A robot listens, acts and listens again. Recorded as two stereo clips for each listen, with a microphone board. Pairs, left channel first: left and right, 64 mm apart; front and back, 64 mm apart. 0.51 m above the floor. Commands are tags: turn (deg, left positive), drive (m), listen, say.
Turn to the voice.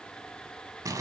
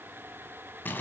<listen/>
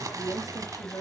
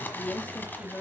<turn deg="70"/>
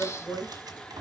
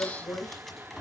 <turn deg="40"/>
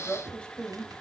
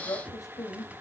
<turn deg="15"/>
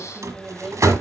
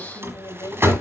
<say>Facing the woman speaking.</say>